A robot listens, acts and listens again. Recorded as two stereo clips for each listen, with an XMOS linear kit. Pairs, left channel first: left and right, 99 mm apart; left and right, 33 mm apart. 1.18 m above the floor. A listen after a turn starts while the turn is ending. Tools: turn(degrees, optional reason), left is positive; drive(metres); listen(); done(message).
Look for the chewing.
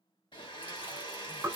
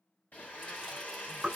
turn(degrees=-15, reason="The chewing: about 15° right or 165° right.")
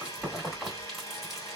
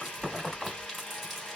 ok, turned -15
done("Facing the chewing.")